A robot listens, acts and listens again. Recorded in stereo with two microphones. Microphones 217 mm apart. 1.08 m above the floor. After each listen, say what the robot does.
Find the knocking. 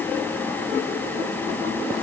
Keep listening.
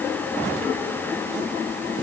Keep listening.
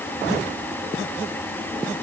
I can't make out knocking.